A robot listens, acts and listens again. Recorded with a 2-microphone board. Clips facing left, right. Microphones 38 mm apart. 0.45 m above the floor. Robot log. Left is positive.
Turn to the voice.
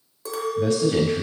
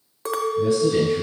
note: The man speaking: about 65° left or 115° left.
cmd yaw +65
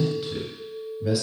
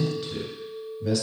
note: So it is at 10° left.
cmd yaw +10
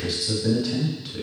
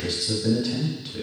end: Facing the man speaking.